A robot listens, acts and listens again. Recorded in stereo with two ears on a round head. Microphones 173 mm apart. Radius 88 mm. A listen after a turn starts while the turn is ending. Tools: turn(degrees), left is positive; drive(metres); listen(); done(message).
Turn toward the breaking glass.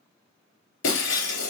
turn(degrees=70)
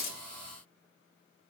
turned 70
listen()
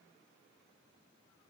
done("I heard breaking glass, but can't make it out now. It was about straight ahead or 40° left.")